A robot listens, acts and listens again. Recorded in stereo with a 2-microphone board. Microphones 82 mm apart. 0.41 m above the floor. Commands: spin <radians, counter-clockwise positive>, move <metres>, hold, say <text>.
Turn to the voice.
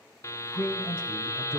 spin 0.52
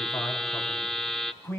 spin 2.62
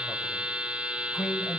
say Facing the man speaking.